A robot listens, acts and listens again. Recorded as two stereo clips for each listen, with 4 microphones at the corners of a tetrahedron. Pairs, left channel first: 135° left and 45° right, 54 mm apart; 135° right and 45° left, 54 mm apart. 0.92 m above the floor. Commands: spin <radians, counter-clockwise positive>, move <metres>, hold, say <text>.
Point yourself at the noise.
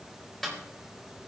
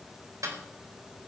spin 0.87
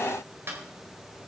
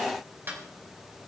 say Found it: a snare drum, straight ahead.